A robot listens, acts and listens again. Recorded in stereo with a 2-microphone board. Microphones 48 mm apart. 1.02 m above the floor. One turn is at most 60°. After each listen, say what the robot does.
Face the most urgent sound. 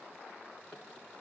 Keep listening.
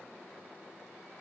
Keep listening.
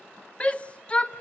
Turn 25° left.
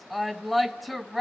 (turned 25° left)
Found it: a shout, straight ahead.